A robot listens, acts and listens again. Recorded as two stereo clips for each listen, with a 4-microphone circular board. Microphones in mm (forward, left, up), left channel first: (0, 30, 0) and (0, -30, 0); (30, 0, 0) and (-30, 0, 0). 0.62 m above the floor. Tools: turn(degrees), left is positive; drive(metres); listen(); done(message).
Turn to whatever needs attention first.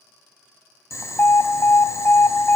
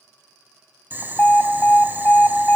turn(degrees=50)
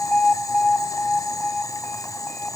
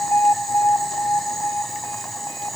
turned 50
turn(degrees=15)
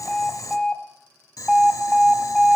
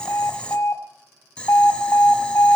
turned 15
done("Found it: an alarm, straight ahead.")